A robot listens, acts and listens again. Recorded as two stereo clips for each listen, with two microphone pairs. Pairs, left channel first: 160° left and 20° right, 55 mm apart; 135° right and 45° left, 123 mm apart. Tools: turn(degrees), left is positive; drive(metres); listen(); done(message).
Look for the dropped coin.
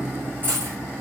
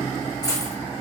turn(degrees=-70)
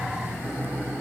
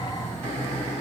done("I heard a dropped coin from this way, but can't make it out now.")